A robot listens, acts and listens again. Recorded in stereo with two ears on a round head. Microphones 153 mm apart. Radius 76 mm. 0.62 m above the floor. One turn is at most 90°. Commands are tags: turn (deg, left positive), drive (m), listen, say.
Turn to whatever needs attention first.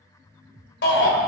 <turn deg="70"/>
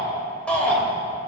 <say>Facing the shout, 2 to 4 m away.</say>